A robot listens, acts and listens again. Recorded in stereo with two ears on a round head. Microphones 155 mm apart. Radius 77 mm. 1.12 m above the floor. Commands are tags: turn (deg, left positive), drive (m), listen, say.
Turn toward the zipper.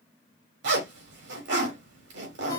<turn deg="-90"/>
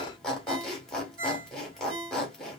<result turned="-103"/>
<say>Facing the zipper.</say>